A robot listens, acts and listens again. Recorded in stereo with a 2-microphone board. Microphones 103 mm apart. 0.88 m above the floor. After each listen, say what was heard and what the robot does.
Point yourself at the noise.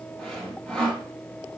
Turn 30° left.
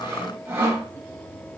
So it is at 25° right. Turn 25° right.
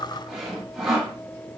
Found it: sawing, straight ahead, 1 to 2 m away.